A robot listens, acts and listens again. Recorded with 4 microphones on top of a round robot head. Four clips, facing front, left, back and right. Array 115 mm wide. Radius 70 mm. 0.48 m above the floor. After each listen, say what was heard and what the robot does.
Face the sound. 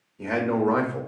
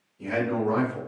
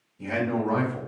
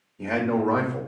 The man speaking: 35° right. Turn 35° right.
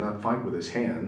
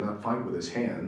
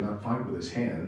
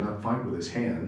The man speaking is now 25° left. Turn 25° left.
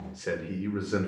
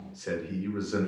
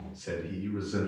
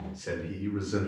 The man speaking is now 25° left. Turn 25° left.
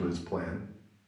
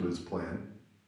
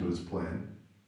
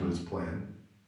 The man speaking is now 15° left. Turn 15° left.
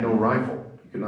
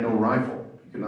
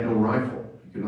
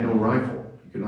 The man speaking is now 20° left. Turn 20° left.
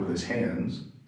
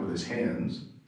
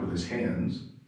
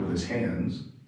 Facing the man speaking, 2 to 4 m away.